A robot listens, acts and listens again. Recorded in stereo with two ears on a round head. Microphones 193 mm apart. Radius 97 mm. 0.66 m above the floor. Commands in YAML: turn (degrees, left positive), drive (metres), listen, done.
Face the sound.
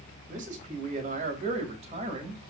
turn: -30
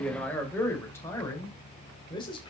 turn: 25
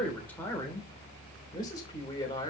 turn: 20
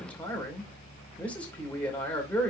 done: "Found it: a man speaking, straight ahead."